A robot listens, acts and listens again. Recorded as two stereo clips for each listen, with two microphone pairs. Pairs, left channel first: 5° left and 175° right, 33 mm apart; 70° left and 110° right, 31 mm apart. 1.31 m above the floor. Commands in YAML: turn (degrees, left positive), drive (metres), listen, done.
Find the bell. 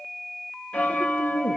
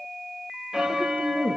turn: -35
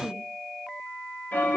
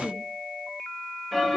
done: "Found it: a bell, straight ahead."